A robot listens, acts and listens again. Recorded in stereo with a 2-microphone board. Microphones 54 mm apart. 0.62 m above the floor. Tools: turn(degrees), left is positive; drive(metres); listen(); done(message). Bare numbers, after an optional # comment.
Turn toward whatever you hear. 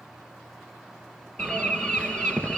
# The bird: about 20° left or 160° left.
turn(20)
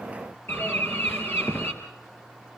# So it is at 135° left.
turn(135)
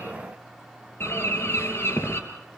# The bird is now 45° left.
turn(45)
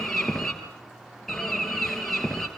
done("Found it: a bird, straight ahead, 2 to 4 m away.")